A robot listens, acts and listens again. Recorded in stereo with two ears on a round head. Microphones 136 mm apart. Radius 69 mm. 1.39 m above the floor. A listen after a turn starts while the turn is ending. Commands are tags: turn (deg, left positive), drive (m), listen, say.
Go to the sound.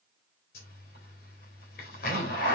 <turn deg="70"/>
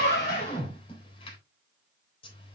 <turn deg="35"/>
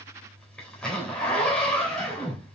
<drive m="1.0"/>
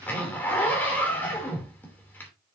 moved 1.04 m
<turn deg="10"/>
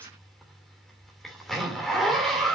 <drive m="1.0"/>
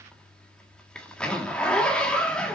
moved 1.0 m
<drive m="1.0"/>
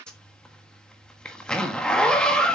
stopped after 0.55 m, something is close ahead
<say>Arrived at the zipper, straight ahead.</say>